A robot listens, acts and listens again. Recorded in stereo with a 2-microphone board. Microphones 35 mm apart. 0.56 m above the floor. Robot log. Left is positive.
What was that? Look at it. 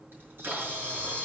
cmd yaw -90
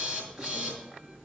end: Facing the camera shutter, over 4 m away.